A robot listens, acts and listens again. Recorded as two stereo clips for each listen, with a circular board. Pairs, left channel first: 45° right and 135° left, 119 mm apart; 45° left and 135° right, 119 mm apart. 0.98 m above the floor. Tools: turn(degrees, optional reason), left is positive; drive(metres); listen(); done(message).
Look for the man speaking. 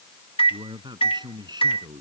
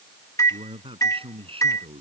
turn(degrees=-170, reason="The man speaking: 170° right.")
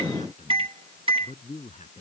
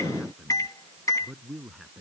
turn(degrees=-45, reason="The man speaking is now 45° right.")
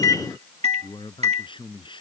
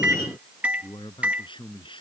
done("Found it: a man speaking, straight ahead.")